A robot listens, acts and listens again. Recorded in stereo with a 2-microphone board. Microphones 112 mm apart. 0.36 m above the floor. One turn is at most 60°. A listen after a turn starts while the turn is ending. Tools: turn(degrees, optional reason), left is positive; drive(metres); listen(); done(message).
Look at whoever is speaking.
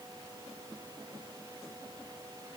listen()
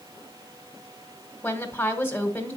turn(degrees=15, reason="The woman speaking: about 15° left or 165° left.")
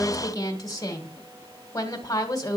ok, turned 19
turn(degrees=60, reason="So it is at 150° left.")
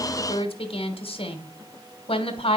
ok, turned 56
turn(degrees=60, reason="The woman speaking is now 90° left.")
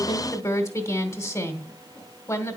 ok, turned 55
turn(degrees=35, reason="The woman speaking is now 35° left.")
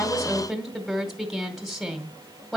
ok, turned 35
done("Found it: a woman speaking, straight ahead.")